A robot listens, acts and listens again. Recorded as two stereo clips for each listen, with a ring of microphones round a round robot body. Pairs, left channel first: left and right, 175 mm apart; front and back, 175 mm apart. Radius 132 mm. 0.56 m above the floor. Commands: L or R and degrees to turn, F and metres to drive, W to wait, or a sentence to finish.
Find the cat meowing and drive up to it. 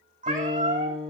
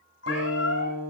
R45
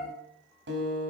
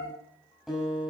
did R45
L15
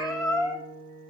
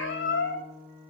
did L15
F1.0
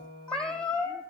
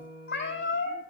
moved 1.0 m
F1.0
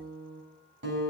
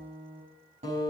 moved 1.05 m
W
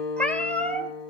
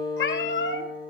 F1.0
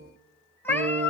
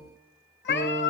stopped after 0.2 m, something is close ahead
L10
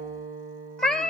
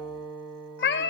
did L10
Arrived at the cat meowing, straight ahead.